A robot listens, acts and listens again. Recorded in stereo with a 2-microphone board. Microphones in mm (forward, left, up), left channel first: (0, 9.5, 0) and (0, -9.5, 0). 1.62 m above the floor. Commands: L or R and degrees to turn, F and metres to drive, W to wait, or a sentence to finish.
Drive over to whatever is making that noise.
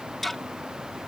L30
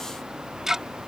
R20
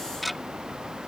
F1.0
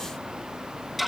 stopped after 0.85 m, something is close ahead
Blocked. The ticking is further on, straight ahead.